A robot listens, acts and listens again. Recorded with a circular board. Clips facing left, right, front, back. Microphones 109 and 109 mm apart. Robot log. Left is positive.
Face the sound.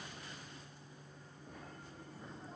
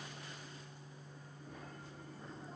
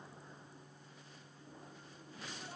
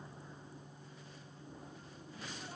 cmd idle
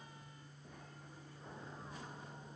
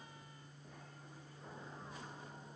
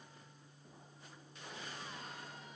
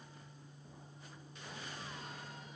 cmd idle
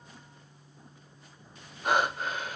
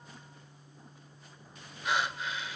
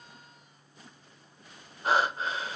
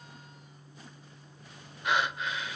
note: The breathing: 50° left.
cmd yaw +50
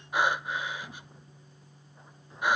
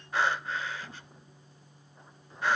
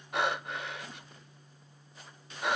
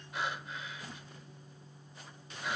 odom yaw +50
note: The breathing is now 15° left.
cmd yaw +15
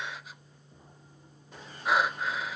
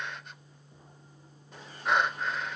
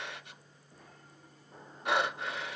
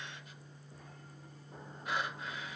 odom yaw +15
end: Facing the breathing, under 1 m away.